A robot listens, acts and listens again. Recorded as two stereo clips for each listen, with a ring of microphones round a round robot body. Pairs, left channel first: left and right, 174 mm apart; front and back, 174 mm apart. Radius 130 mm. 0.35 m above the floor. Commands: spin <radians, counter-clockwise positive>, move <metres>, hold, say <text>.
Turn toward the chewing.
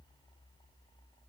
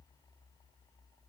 hold
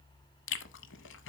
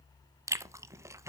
spin 1.83
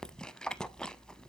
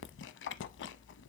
say Facing the chewing.